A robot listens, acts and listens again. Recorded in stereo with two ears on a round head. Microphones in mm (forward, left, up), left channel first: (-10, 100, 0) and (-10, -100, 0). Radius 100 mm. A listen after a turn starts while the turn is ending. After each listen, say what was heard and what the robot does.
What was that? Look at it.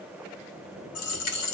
The dropped coin: about 75° left or 105° left. Turn 75° left.
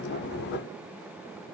Keep listening.
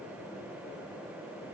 I heard a dropped coin, but can't make it out now. It was about straight ahead or 30° left.